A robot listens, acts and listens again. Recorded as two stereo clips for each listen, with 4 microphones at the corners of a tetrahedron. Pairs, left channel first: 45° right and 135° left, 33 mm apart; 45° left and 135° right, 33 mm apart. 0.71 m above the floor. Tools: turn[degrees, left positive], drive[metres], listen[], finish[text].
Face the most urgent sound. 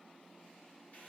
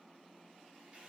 Action: listen[]
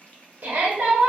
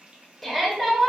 Thought: The shout: 130° left.
Action: turn[130]
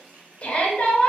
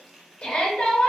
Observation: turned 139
Action: finish[Found it: a shout, straight ahead, 1 to 2 m away.]